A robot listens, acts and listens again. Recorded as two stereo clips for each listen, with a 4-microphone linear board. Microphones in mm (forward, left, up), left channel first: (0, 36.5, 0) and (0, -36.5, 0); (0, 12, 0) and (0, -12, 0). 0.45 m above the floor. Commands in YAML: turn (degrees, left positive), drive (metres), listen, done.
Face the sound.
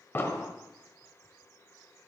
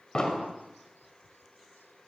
turn: 30
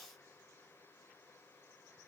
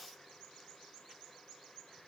listen: true
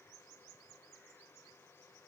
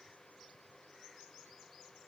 done: "I heard an explosion, but can't make it out now. It was about straight ahead or 120° left."